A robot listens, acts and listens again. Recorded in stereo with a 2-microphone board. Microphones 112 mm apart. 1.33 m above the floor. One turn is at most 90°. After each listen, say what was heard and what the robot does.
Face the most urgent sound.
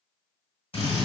Keep listening.
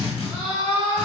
The scream: about 55° right or 125° right. Turn 55° right.
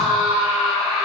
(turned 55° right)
Facing the scream, 1 to 2 m away.